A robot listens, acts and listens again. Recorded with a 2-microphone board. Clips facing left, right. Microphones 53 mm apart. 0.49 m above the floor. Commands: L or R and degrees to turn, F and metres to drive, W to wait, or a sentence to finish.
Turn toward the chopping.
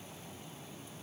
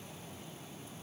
W
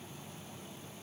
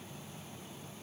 W
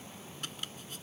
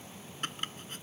R40
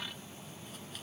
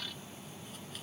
W
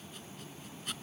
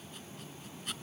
Facing the chopping.